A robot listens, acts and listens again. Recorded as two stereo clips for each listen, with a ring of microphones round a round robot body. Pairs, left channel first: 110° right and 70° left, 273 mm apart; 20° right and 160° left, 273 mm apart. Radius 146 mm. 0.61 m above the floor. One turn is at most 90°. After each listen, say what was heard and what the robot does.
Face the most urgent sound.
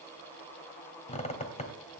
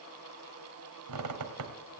Keep listening.
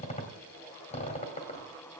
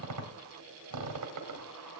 Keep listening.
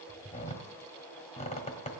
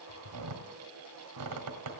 I can't make out anything urgent to turn to.